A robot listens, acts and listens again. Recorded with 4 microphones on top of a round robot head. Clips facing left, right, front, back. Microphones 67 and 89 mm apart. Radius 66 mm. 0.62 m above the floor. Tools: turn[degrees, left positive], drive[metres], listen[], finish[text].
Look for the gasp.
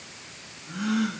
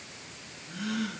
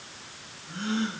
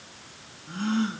Thought: The gasp: 150° left.
Action: turn[150]
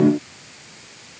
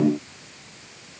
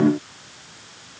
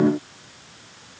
Action: finish[I heard a gasp from this way, but can't make it out now.]